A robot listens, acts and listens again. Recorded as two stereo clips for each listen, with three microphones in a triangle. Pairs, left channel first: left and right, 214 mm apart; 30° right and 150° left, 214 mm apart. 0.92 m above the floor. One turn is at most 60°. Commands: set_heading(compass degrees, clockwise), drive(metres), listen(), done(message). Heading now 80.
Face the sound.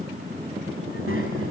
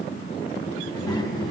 set_heading(140)
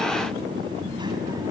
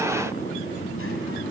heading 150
set_heading(180)
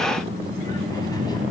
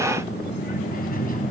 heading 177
set_heading(157)
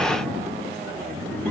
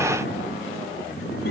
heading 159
set_heading(149)
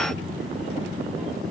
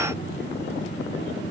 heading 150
done("Facing the child speaking, over 4 m away.")